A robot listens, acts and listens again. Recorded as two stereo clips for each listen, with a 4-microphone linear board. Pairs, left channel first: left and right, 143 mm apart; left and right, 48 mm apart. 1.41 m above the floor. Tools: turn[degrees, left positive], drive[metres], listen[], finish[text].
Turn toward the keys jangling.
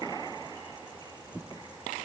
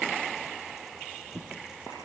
Action: listen[]
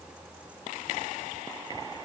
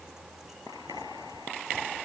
Action: listen[]
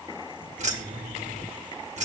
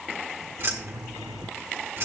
Thought: The keys jangling: about 55° right or 125° right.
Action: turn[-55]
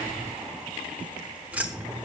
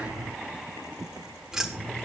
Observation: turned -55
Thought: So it is at 10° right.
Action: turn[-10]
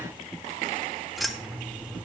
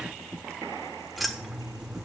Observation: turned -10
Action: finish[Found it: keys jangling, straight ahead, 1 to 2 m away.]